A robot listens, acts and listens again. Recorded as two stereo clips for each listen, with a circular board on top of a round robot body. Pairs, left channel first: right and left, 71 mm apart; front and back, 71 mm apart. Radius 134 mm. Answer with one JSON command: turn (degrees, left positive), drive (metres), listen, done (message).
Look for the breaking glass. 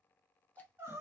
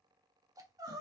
{"listen": true}
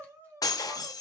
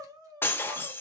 {"turn": -60}
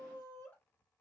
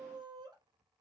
{"done": "Facing where the breaking glass came from. I can't hear it now."}